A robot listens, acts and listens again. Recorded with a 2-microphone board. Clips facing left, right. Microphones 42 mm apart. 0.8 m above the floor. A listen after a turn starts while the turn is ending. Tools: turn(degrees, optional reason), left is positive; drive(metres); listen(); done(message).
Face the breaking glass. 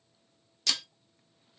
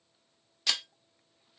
turn(degrees=-15, reason="The breaking glass: about 15° right or 165° right.")
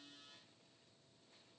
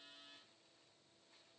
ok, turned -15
listen()
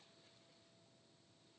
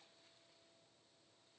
done("I heard breaking glass, but can't make it out now. It was about straight ahead or 150° right.")